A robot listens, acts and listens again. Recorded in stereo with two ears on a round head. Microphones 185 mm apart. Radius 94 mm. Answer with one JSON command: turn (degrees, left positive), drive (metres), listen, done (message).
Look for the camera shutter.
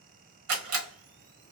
{"turn": -70}
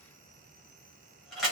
{"done": "Facing the camera shutter."}